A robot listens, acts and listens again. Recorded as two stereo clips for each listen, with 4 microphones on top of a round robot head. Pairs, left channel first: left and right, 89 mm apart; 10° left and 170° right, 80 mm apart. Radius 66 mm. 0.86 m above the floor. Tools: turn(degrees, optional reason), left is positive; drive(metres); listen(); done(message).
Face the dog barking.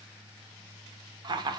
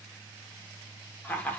listen()
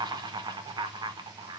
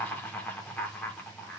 listen()
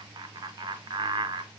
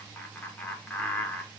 done("I can't make out a dog barking, only laughter.")